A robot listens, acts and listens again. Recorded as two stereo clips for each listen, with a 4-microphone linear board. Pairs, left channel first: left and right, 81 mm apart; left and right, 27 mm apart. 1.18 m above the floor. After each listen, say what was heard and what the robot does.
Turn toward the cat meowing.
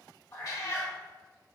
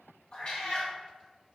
The cat meowing: about 45° left or 135° left. Turn 45° left.
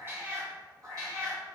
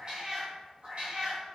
So it is at 55° right. Turn 55° right.
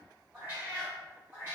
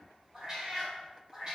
The cat meowing is now 25° right. Turn 25° right.
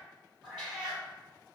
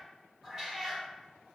The cat meowing is now 10° right. Turn 10° right.
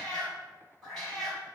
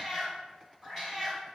Facing the cat meowing, 2 to 4 m away.